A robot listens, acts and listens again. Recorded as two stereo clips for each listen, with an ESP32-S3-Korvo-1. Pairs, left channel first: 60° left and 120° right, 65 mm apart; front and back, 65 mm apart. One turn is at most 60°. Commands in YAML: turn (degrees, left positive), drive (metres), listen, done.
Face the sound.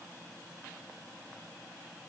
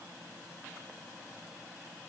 listen: true
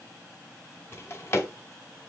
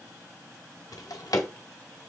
turn: 10
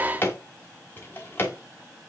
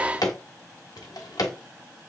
done: "Found it: a drawer, straight ahead, under 1 m away."